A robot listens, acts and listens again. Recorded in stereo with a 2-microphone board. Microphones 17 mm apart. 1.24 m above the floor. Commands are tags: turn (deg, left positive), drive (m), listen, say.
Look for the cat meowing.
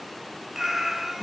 <turn deg="-20"/>
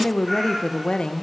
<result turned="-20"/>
<listen/>
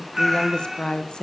<turn deg="-30"/>
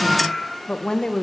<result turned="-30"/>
<turn deg="15"/>
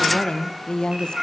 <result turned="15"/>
<say>Found it: a cat meowing, straight ahead, 2 to 4 m away.</say>